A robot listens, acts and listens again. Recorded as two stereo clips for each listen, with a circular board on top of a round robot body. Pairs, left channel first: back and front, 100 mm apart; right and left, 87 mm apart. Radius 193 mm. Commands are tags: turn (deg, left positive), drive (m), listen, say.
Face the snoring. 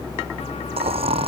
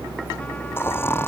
<turn deg="-25"/>
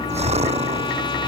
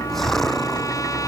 <say>Found it: snoring, straight ahead.</say>